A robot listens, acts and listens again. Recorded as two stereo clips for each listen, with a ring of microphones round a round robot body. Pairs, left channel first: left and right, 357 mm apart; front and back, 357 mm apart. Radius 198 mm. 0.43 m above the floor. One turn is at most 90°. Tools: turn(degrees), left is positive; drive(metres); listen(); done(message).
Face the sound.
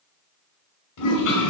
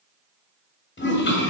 turn(degrees=60)
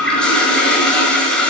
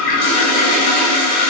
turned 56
done("Facing the toilet flushing.")